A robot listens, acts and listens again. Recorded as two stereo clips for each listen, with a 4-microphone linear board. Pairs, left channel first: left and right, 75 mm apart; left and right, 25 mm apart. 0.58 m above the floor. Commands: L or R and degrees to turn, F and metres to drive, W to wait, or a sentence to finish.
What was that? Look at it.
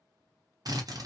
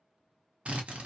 R55
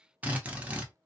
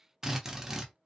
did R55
R20
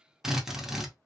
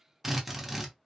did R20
Found it: a drill, straight ahead.